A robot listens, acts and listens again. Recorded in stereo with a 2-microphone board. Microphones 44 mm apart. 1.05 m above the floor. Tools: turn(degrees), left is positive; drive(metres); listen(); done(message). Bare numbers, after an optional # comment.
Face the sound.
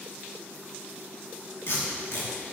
# The tape being pulled: about 75° left or 105° left.
turn(75)
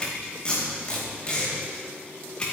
# So it is at 25° left.
turn(25)
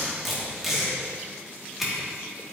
# The tape being pulled is now 10° right.
turn(-10)
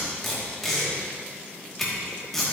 done("Found it: tape being pulled, straight ahead, 2 to 4 m away.")